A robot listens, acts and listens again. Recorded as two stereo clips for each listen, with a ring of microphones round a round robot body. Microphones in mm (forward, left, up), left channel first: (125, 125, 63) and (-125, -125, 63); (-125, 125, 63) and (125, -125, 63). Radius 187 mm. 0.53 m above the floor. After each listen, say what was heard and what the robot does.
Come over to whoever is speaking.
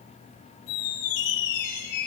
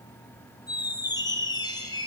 Keep listening.
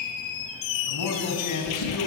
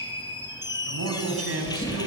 The man speaking: 10° left. Turn 10° left.
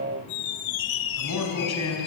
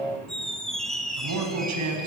Drive 1.0 m forward.
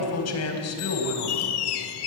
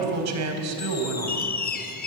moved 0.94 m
Drive 1.0 m forward.
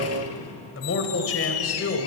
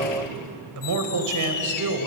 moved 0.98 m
Drive 1.0 m forward.
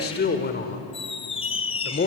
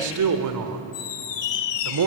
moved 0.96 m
The man speaking is now 15° right. Turn 15° right.
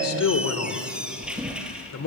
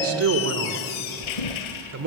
Drive 1.0 m forward.
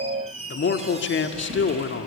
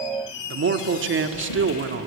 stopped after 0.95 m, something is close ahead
Arrived at the man speaking, straight ahead.